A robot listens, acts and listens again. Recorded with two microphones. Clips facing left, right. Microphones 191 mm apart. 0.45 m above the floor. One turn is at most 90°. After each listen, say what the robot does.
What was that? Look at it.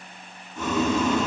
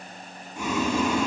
Turn 30° right.
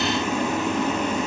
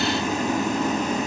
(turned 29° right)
Turn 90° right.
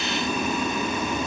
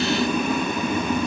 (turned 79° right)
Turn 60° right.
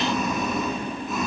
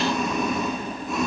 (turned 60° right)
Found it: boiling, straight ahead.